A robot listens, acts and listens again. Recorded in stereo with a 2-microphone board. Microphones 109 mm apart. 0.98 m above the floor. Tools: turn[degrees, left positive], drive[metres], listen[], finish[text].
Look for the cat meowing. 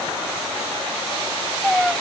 Action: turn[30]
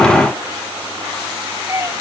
Thought: So it is at 25° right.
Action: turn[-25]
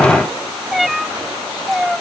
Action: finish[Found it: a cat meowing, straight ahead.]